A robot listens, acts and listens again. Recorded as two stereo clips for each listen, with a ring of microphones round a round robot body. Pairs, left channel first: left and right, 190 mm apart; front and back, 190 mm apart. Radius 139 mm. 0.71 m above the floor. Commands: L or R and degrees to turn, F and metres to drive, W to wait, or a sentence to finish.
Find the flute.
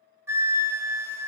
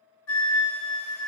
R10
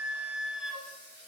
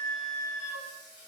Facing the flute, under 1 m away.